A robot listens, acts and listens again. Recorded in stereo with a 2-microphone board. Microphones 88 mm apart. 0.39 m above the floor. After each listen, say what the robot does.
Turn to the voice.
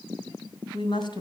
Turn 60° left.
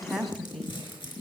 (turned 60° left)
Found it: a woman speaking, straight ahead, 2 to 4 m away.